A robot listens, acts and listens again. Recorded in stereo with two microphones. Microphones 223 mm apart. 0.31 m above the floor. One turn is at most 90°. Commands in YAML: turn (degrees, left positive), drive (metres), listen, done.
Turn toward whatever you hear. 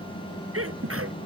turn: -75
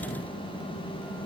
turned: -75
listen: true
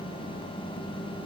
done: "I heard a sneeze, but can't make it out now. It was about straight ahead or 30° right."